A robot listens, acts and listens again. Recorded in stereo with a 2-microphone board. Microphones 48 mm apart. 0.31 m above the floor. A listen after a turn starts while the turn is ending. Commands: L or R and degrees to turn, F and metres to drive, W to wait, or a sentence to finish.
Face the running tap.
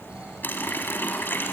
L50
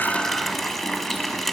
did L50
Found it: a running tap, straight ahead, 1 to 2 m away.